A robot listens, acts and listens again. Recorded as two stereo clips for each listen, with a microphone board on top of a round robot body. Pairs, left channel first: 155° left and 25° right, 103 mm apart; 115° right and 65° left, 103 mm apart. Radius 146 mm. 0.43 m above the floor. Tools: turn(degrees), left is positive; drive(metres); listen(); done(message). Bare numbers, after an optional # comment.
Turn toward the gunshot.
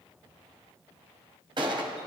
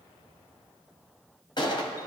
# The gunshot: 65° right.
turn(-65)
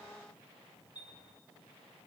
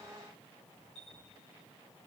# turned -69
done("Facing where the gunshot came from. I can't hear it now.")